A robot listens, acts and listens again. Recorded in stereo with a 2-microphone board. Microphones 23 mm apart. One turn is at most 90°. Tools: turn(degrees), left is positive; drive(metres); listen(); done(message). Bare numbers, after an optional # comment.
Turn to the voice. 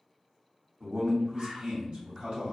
# The man speaking: about 60° right or 120° right.
turn(-60)
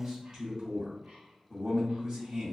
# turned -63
# So it is at 40° right.
turn(-40)
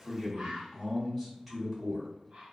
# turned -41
done("Found it: a man speaking, straight ahead, 1 to 2 m away.")